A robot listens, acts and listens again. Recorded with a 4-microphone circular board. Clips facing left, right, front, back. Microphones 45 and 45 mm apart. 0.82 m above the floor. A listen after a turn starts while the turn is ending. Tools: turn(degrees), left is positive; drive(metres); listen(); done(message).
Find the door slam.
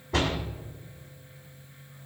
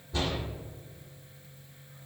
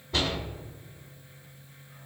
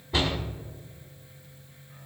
turn(degrees=100)
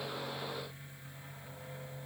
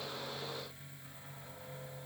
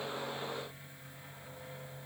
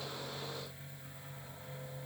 done("Facing where the door slam came from. I can't hear it now.")